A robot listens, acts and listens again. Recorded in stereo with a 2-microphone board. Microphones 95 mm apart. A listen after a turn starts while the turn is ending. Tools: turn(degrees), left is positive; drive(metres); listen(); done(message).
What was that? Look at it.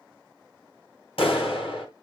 turn(degrees=90)
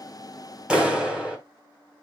turn(degrees=-10)
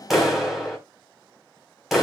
done("Facing the clap, 2 to 4 m away.")